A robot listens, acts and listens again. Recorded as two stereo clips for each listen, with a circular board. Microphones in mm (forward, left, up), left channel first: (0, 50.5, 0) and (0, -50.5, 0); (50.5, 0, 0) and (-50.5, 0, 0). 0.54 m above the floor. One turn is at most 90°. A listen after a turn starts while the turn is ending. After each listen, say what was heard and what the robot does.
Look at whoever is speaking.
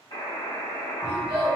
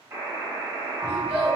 The child speaking: 100° right. Turn 90° right.
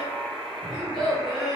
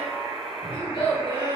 Facing the child speaking, 1 to 2 m away.